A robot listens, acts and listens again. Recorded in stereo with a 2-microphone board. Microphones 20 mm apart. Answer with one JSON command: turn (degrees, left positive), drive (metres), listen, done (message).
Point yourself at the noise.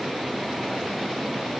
{"listen": true}
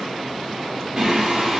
{"turn": -35}
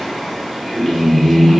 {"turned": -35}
{"done": "Found it: singing, straight ahead."}